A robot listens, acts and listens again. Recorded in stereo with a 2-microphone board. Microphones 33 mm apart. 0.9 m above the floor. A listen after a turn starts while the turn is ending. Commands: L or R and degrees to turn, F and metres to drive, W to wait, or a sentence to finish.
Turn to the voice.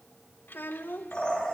L90
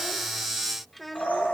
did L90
Found it: a child speaking, straight ahead.